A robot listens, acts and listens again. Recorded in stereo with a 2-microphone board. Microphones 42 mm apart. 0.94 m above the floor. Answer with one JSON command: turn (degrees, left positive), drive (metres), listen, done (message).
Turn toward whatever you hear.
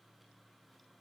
{"listen": true}
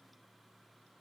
{"listen": true}
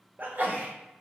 {"turn": -45}
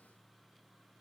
{"listen": true}
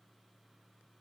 {"done": "I heard a sneeze, but can't make it out now. It was about straight ahead or 90° right."}